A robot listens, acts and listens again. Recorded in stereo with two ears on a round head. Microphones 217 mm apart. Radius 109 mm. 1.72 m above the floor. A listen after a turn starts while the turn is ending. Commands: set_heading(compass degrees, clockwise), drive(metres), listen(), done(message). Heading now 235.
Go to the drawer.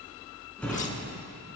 set_heading(205)
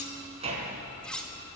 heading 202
set_heading(227)
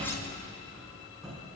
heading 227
drive(1.0)
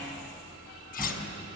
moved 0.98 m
drive(1.0)
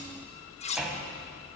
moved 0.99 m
drive(1.0)
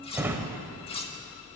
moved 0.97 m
set_heading(242)
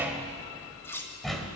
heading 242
drive(1.0)
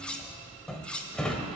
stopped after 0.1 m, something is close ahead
done("I am next to the drawer.")